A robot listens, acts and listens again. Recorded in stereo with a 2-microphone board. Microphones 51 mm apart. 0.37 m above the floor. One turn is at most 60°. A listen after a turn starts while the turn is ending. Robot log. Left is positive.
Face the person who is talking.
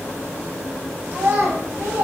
note: The child speaking: about 60° right or 120° right.
cmd yaw -60
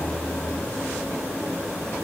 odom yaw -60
cmd idle
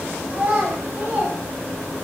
note: So it is at 35° right.
cmd yaw -35
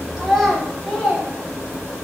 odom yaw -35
end: Facing the child speaking.